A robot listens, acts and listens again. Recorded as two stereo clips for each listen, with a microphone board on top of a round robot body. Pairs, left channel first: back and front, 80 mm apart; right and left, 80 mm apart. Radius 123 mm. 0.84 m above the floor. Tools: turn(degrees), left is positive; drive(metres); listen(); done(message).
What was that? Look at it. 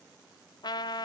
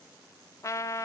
turn(degrees=-145)
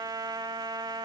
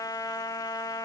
turn(degrees=-40)
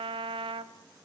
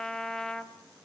done("Facing the trumpet, 1 to 2 m away.")